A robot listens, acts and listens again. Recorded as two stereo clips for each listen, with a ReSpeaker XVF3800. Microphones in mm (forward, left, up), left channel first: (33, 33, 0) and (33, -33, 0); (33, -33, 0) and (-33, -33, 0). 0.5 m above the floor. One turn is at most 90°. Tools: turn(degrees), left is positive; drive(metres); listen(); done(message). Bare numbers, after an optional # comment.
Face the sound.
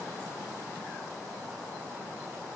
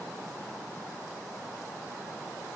listen()
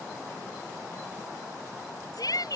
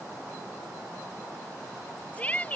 # The shout: 70° left.
turn(70)
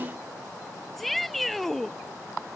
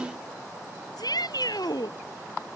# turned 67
done("Found it: a shout, straight ahead.")